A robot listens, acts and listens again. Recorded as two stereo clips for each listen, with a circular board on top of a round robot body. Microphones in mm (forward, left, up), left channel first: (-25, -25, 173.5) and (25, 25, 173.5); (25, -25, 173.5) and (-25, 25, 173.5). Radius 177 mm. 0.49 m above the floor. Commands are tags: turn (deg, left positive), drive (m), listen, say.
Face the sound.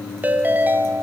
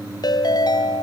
<turn deg="-20"/>
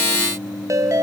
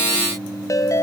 <say>Facing the ringtone.</say>